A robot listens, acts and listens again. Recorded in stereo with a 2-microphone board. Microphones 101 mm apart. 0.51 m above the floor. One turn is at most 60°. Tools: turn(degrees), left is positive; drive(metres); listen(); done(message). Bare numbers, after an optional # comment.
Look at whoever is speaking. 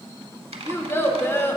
# The child speaking: about 20° left or 160° left.
turn(20)
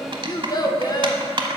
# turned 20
# So it is at 135° left.
turn(60)
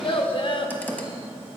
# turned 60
# The child speaking is now 70° left.
turn(60)
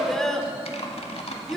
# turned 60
done("Found it: a child speaking, straight ahead.")